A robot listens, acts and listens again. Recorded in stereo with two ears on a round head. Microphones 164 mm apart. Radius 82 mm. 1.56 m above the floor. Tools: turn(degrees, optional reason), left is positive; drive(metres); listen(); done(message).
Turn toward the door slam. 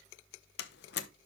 turn(degrees=60, reason="The door slam: about 60° left or 120° left.")
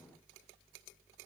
listen()
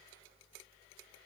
done("I heard a door slam, but can't make it out now. It was about straight ahead or 60° left.")